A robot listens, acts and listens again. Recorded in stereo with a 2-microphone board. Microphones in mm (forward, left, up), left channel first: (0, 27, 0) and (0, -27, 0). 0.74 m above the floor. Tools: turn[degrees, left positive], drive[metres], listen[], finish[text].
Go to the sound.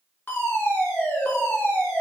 Thought: The fire alarm: about 35° left or 145° left.
Action: turn[35]
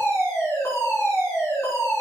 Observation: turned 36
Thought: So it is at 105° left.
Action: turn[105]
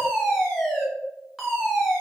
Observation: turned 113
Thought: The fire alarm is now 10° right.
Action: turn[-10]
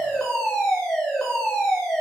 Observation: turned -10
Action: drive[1.0]
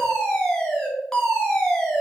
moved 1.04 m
Thought: The fire alarm is now 10° left.
Action: turn[10]
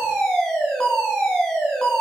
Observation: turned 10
Action: drive[1.0]
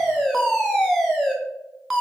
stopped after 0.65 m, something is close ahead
Thought: The fire alarm is now 10° right.
Action: turn[-10]
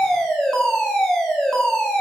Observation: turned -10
Action: finish[Arrived at the fire alarm, straight ahead.]